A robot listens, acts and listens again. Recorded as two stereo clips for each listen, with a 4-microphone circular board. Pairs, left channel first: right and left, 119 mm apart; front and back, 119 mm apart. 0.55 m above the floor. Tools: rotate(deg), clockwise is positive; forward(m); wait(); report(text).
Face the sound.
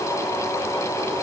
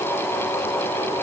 wait()
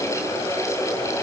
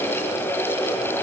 wait()
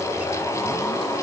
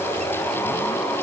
report("I can't make out anything to turn to.")